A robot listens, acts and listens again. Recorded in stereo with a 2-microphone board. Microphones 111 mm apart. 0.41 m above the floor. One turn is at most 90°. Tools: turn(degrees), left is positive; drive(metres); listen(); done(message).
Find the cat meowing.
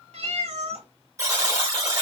turn(degrees=-75)
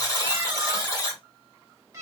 turn(degrees=-30)
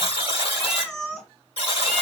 done("Found it: a cat meowing, straight ahead.")